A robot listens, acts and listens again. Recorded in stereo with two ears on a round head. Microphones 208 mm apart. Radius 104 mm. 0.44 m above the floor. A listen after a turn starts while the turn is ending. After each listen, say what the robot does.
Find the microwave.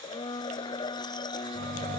Turn 40° right.
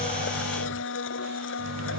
Turn 95° right.
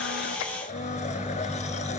Found it: a microwave, straight ahead.